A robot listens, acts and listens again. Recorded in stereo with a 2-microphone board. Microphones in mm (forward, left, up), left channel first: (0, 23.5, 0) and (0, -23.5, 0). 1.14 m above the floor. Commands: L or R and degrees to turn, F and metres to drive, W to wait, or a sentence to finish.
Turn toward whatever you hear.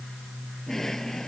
L30
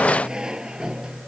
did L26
R20
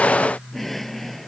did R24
Found it: a drawer, straight ahead.